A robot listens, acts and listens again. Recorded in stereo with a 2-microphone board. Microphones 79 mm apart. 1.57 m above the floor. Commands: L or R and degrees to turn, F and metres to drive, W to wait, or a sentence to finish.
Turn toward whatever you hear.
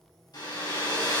L60
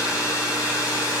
L50
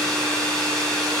L15
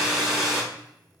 Facing the hair dryer.